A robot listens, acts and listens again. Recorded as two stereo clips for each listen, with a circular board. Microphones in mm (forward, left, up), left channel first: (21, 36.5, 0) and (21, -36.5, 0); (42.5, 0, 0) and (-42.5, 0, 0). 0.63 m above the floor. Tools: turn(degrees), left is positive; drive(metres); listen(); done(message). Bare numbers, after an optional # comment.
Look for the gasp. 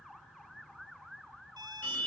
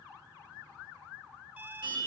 listen()
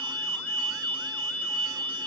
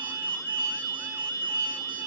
listen()
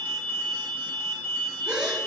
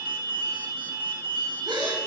# The gasp: 165° right.
turn(-165)
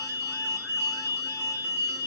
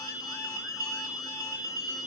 done("Facing where the gasp came from. I can't hear it now.")